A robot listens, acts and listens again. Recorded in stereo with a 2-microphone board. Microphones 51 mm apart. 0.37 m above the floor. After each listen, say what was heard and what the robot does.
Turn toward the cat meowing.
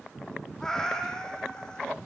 The cat meowing: about 15° left or 165° left. Turn 15° left.
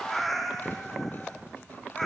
Turn 30° left.
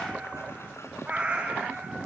So it is at 25° right. Turn 25° right.
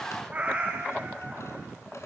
The cat meowing is now 25° right. Turn 25° right.
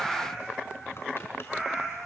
Found it: a cat meowing, straight ahead, over 4 m away.